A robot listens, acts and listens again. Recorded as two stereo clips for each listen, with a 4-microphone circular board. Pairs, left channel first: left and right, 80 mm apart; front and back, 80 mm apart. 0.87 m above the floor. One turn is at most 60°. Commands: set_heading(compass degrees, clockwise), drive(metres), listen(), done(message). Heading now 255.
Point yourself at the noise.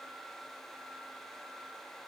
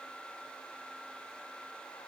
listen()
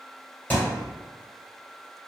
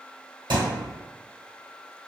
set_heading(195)
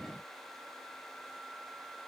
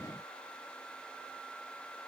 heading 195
set_heading(135)
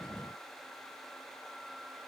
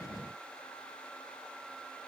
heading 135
set_heading(100)
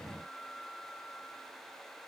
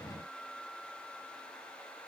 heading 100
done("Facing where the thud came from. I can't hear it now.")